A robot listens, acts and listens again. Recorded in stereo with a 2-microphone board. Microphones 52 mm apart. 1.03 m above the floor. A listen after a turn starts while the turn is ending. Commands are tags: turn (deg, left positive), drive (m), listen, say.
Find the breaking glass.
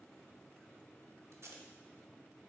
<listen/>
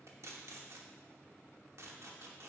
<listen/>
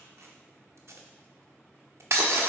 <turn deg="-65"/>
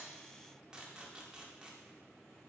<listen/>
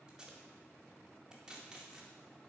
<say>I heard breaking glass, but can't make it out now. It was about straight ahead or 50° right.</say>